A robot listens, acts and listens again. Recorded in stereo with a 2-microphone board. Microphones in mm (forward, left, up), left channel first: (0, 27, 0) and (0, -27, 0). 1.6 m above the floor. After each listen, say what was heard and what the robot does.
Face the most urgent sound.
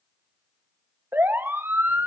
The siren: about 45° right or 135° right. Turn 45° right.
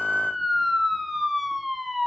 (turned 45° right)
Found it: a siren, straight ahead.